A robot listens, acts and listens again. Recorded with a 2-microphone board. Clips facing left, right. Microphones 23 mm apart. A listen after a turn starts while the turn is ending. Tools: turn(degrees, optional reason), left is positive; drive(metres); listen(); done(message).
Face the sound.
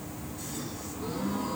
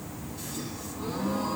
turn(degrees=-60, reason="The gasp: about 60° right or 120° right.")
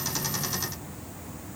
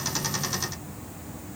listen()
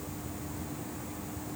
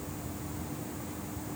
done("I heard a gasp, but can't make it out now. It was about straight ahead or 60° right.")